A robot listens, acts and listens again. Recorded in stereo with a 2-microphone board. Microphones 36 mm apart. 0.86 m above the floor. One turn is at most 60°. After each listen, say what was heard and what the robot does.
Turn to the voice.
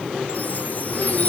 Keep listening.
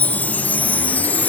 Keep listening.
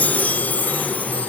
I can't make out anyone speaking to turn to.